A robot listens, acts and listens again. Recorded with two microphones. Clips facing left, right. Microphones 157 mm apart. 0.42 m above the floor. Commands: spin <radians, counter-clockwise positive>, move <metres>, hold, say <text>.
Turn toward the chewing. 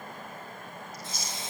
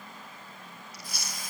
spin -1.22
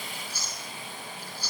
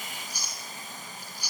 spin -0.26
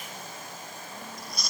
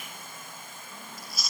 say Facing the chewing, over 4 m away.